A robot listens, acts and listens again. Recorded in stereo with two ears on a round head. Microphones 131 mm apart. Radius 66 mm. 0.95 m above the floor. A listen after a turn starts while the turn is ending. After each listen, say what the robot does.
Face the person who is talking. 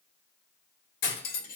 Keep listening.
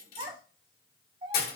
Turn 35° right.
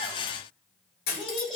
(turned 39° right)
Found it: a child speaking, straight ahead, 2 to 4 m away.